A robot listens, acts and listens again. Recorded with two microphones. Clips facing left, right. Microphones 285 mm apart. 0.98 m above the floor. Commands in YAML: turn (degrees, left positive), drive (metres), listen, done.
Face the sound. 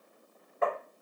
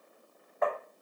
turn: 35
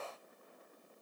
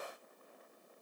listen: true
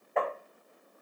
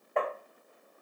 done: "Found it: tapping, straight ahead."